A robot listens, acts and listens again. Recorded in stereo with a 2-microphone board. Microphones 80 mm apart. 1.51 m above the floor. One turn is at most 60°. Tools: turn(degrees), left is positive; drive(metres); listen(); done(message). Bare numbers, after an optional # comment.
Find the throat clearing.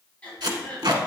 # The throat clearing: about 15° left or 165° left.
turn(15)
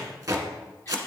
listen()
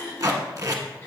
# So it is at 150° left.
turn(60)
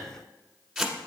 # Nothing new. It was at 90° left.
turn(60)
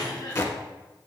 # The throat clearing is now 60° left.
turn(60)
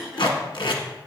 done("Found it: throat clearing, straight ahead.")